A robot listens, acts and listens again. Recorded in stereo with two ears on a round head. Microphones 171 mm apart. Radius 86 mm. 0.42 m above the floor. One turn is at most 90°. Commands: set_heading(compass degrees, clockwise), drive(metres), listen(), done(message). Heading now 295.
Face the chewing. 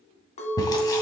set_heading(275)
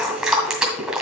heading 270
done("Facing the chewing.")